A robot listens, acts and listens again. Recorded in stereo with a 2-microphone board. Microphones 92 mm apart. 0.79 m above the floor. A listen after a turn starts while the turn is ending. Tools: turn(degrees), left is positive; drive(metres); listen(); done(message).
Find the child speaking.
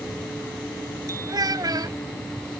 turn(degrees=-45)
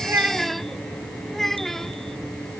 done("Found it: a child speaking, straight ahead.")